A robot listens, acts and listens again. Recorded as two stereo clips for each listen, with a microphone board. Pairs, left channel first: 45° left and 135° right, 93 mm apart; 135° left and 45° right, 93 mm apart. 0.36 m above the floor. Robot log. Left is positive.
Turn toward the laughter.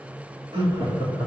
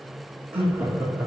note: The laughter: 115° right.
cmd yaw -115
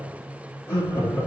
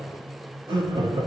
note: The laughter is now 20° right.
cmd yaw -20
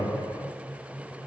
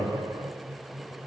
end: Found it: laughter, straight ahead, over 4 m away.